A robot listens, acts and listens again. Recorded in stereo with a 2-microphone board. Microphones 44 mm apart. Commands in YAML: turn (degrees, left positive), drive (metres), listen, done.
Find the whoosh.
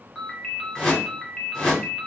turn: 30
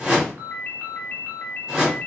turn: -15
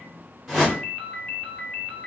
done: "Facing the whoosh, 1 to 2 m away."